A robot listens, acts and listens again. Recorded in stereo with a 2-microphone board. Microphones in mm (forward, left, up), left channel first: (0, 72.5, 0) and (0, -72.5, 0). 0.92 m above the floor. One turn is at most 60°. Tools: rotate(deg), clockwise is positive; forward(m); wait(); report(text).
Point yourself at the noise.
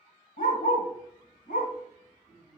rotate(-60)
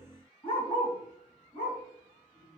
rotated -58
rotate(-35)
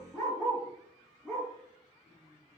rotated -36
report("Found it: a dog barking, straight ahead, over 4 m away.")